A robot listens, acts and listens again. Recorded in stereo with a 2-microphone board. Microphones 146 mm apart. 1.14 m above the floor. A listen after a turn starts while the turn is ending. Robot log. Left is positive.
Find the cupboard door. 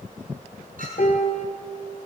cmd idle
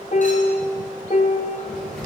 cmd yaw +30
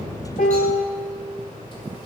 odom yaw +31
note: So it is at 150° left.
cmd yaw +150
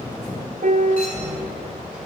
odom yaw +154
end: Facing the cupboard door.